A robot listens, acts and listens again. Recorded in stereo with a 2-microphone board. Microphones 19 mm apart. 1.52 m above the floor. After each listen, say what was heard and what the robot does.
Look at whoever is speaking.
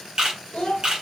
The child speaking: about 65° left or 115° left. Turn 65° left.
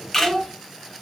So it is at 30° left. Turn 30° left.
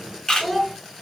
Found it: a child speaking, straight ahead.